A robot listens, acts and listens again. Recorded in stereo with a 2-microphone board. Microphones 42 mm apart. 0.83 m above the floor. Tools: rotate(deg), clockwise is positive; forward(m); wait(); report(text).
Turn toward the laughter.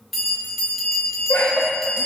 rotate(-50)
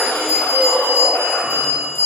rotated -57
wait()
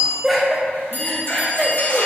report("Found it: laughter, straight ahead, 1 to 2 m away.")